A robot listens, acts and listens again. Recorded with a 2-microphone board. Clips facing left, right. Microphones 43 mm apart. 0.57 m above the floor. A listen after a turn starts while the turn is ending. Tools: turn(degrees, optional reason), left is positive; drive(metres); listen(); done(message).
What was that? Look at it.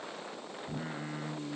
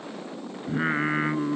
turn(degrees=-60, reason="The singing: about 60° right or 120° right.")
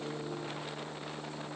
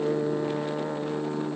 turn(degrees=-50, reason="So it is at 50° right.")
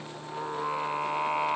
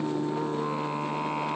turn(degrees=20, reason="The singing is now 20° left.")
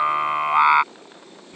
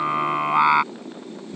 turn(degrees=10, reason="The singing is now 10° left.")
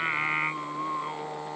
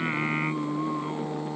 turn(degrees=15, reason="The singing is now 15° left.")
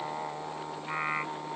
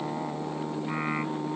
done("Facing the singing.")